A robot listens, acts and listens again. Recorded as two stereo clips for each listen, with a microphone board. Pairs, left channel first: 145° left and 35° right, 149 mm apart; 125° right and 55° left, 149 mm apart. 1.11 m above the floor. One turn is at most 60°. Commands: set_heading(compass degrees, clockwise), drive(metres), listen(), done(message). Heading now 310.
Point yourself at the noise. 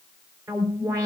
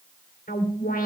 set_heading(10)
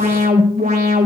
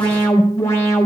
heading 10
set_heading(65)
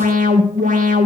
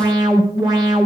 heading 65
set_heading(75)
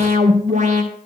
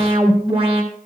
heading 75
done("Found it: an alarm, straight ahead.")